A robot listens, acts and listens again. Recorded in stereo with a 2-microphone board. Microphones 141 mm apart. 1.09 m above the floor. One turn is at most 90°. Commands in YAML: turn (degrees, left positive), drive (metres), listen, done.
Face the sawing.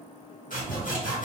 turn: 70
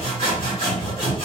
turn: 40
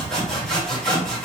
done: "Facing the sawing, 1 to 2 m away."